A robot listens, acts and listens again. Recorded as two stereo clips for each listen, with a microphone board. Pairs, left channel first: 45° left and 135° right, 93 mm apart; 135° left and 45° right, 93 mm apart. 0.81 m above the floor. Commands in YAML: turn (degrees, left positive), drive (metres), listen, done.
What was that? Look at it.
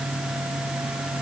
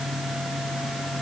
listen: true
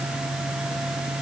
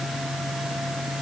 listen: true
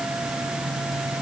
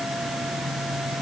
done: "I can't make out anything."